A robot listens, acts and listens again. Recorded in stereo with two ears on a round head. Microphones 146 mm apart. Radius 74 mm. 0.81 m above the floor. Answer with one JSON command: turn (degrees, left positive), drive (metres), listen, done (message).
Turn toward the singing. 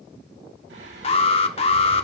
{"turn": -90}
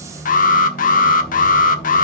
{"done": "Found it: singing, straight ahead, over 4 m away."}